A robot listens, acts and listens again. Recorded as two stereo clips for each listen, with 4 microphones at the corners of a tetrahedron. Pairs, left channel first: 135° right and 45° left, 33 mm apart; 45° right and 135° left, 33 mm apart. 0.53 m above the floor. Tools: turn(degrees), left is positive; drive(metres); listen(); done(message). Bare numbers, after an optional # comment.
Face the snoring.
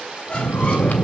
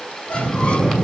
# The snoring: 125° right.
turn(-125)
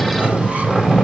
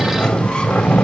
# The snoring is now 20° right.
turn(-20)
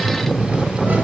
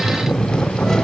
done("Found it: snoring, straight ahead, 2 to 4 m away.")